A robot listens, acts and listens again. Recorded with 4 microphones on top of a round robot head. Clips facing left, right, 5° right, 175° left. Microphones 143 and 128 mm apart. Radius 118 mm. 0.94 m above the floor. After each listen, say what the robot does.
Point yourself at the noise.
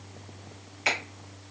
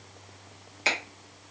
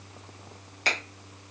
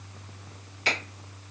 Turn 40° right.
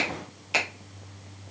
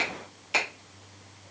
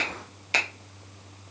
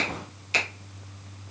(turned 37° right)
Found it: a finger snap, straight ahead, under 1 m away.